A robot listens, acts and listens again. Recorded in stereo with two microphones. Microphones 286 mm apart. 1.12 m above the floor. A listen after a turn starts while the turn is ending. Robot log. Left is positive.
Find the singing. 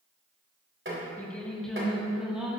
cmd yaw -30
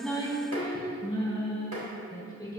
note: So it is at 10° left.
cmd yaw +10
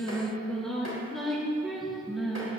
end: Facing the singing, over 4 m away.